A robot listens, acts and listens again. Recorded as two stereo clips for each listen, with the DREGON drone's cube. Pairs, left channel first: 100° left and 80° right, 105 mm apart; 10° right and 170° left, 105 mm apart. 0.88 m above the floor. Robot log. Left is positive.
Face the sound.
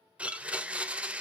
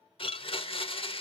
end: Found it: a blender, straight ahead.